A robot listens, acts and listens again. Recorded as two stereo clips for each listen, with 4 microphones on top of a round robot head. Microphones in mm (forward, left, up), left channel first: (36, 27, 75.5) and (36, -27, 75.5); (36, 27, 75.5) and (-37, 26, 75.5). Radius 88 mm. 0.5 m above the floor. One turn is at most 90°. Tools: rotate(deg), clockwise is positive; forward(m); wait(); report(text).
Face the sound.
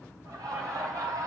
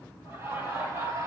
rotate(90)
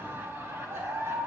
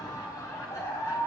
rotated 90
rotate(50)
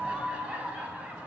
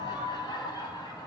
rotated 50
rotate(25)
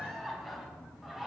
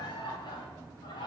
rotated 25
report("Found it: laughter, straight ahead.")